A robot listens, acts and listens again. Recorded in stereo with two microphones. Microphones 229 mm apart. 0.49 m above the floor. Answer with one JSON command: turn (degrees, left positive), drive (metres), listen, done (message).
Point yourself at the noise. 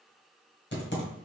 {"turn": 50}
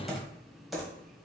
{"done": "Facing the typing on a keyboard."}